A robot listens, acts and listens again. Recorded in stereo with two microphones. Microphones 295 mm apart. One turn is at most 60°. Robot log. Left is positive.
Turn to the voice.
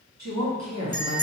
note: The woman speaking: about 65° right or 115° right.
cmd yaw -60
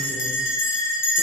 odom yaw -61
cmd idle
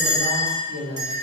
note: So it is at 40° right.
cmd yaw -40
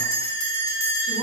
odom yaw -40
cmd idle
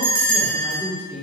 end: Facing the woman speaking, 1 to 2 m away.